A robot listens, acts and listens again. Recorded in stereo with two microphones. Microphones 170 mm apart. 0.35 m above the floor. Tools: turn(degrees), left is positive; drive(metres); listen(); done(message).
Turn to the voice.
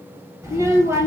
turn(degrees=-15)
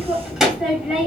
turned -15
done("Found it: a child speaking, straight ahead, 1 to 2 m away.")